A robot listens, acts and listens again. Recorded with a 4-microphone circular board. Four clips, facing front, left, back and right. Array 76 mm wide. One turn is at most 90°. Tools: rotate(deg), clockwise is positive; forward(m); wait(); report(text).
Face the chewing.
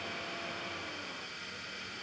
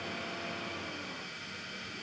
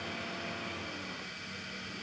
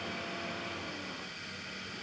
wait()
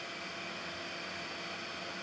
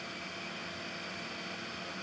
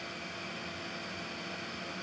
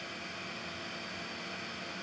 wait()
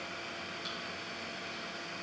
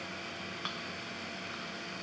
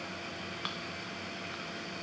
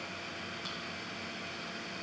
rotate(-90)
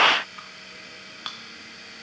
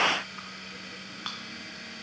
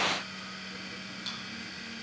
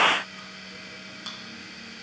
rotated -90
rotate(-35)
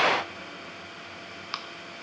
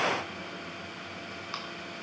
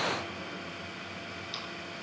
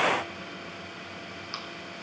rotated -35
rotate(-15)
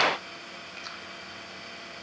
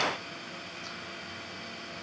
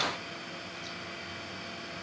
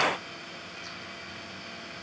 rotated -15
wait()
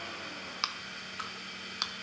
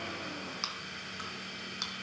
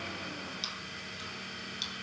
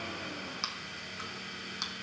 report("Found it: chewing, straight ahead.")